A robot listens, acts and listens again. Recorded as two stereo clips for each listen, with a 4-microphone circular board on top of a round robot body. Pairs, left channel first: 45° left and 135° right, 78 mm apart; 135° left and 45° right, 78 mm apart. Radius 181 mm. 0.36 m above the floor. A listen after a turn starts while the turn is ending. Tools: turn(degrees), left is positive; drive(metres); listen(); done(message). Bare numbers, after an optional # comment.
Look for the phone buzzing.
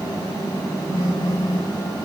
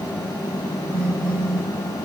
# The phone buzzing: 145° right.
turn(-145)
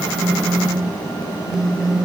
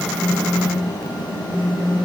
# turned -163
# The phone buzzing is now 15° left.
turn(15)
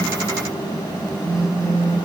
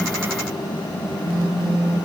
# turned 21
done("Facing the phone buzzing, over 4 m away.")